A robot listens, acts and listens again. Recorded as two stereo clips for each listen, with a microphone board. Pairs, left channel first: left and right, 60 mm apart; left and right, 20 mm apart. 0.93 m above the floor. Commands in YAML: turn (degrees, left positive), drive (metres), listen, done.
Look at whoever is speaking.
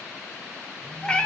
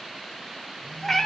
listen: true
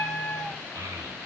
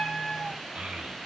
turn: -90
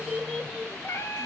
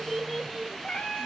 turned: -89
done: "Found it: a child speaking, straight ahead."